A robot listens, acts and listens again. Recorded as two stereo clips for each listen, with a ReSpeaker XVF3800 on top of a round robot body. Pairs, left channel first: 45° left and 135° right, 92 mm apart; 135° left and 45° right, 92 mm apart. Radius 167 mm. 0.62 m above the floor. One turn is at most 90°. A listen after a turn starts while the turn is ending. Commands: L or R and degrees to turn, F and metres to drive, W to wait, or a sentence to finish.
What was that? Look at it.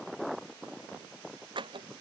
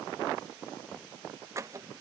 R90
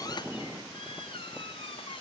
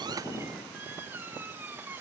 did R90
L25
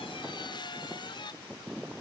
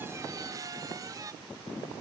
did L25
L10
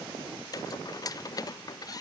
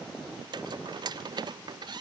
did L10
Found it: a squeak, straight ahead.